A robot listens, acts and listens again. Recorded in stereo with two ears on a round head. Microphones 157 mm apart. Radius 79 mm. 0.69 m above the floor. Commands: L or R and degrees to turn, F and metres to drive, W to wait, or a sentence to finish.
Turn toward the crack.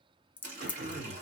L30
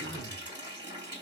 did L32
W
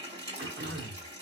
I heard a crack, but can't make it out now. It was about 25° right or 140° left.